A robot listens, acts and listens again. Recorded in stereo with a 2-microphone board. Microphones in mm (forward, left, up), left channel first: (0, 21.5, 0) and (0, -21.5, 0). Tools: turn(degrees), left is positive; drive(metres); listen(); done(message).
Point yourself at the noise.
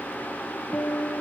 turn(degrees=90)
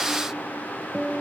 turn(degrees=-10)
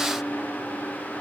listen()
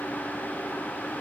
listen()
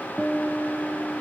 done("Facing the guitar.")